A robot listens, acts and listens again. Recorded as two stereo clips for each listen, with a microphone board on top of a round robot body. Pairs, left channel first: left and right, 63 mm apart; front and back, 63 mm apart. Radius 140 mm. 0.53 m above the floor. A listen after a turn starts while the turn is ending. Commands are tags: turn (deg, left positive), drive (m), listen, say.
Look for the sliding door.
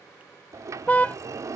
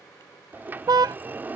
<turn deg="-120"/>
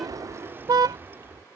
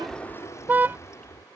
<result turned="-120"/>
<turn deg="-35"/>
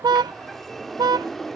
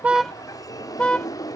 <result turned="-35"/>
<say>Found it: a sliding door, straight ahead.</say>